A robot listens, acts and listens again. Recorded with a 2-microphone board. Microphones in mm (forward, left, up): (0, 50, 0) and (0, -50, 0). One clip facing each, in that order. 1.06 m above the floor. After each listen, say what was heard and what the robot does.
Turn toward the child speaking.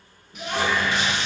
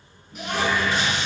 The child speaking: about 70° right or 110° right. Turn 70° right.
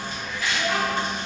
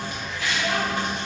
Found it: a child speaking, straight ahead.